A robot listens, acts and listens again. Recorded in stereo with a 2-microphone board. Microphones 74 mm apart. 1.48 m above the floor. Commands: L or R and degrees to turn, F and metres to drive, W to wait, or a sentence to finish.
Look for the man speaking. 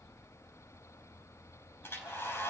W
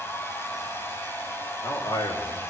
L60
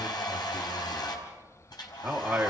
R20
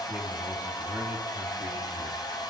W
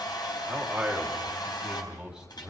R10
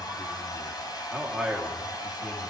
Found it: a man speaking, straight ahead.